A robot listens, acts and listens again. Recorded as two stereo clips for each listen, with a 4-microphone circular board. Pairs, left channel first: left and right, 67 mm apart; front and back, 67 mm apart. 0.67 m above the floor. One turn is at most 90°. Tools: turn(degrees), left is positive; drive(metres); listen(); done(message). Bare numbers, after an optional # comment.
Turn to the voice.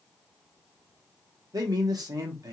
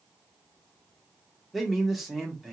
# The man speaking: 95° right.
turn(-90)
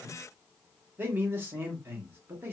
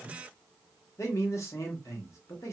# The man speaking is now 35° right.
turn(-35)
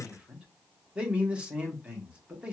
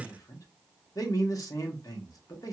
# The man speaking is now 20° right.
turn(-20)
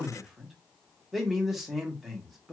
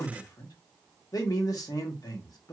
done("Facing the man speaking.")